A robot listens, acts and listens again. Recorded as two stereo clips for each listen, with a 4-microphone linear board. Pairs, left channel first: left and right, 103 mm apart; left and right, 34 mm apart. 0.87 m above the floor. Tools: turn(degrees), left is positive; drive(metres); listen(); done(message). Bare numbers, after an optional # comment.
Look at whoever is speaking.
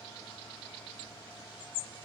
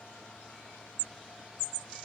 listen()
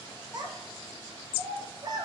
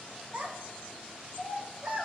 # The child speaking: about 40° right or 140° right.
turn(-40)
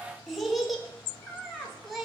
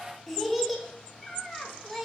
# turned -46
done("Found it: a child speaking, straight ahead.")